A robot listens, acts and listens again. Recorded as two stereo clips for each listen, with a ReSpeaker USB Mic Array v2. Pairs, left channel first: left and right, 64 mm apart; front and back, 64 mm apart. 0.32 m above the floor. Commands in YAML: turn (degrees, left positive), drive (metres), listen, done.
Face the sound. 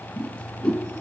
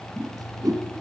turn: 165
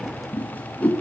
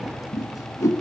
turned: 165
turn: 25
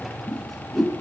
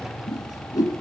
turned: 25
done: "Found it: a whoosh, straight ahead, 2 to 4 m away."